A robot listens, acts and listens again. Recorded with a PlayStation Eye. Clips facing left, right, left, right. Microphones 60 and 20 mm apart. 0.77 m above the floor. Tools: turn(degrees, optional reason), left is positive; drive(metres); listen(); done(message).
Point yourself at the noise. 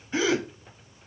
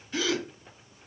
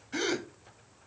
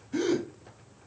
turn(degrees=25, reason="The gasp: about 25° left or 155° left.")
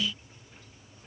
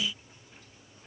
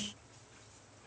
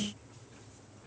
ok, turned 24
listen()
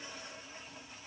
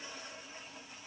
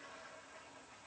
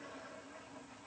done("I heard a gasp, but can't make it out now. It was about straight ahead or 130° left.")